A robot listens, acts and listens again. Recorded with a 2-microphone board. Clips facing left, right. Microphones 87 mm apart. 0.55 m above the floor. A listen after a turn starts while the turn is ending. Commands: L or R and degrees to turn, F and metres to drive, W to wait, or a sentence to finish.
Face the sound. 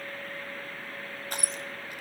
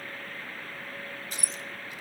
L60
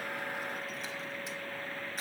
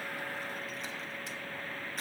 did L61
W
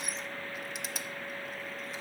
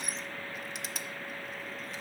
Facing the crushing.